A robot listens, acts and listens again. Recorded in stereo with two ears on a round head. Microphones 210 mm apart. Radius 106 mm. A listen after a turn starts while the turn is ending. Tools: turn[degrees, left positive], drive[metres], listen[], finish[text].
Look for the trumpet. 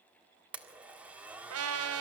Thought: The trumpet: about 75° right or 105° right.
Action: turn[-75]
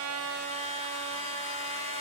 Thought: So it is at 25° right.
Action: turn[-25]
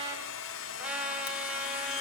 Action: finish[Facing the trumpet, 2 to 4 m away.]